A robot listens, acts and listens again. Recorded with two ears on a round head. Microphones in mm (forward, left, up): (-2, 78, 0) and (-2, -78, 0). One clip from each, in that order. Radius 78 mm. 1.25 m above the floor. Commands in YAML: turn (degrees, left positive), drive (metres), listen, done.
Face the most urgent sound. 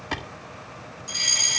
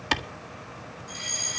turn: 60
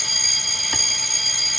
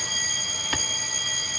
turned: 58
turn: 55
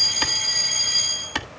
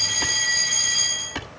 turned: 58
done: "Facing the fire alarm."